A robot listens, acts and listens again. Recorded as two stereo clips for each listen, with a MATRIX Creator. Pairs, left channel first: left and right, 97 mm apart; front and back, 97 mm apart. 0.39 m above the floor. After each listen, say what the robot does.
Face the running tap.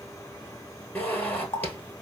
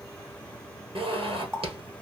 Turn 120° left.
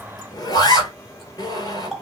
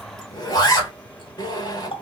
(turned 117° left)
Found it: a running tap, straight ahead.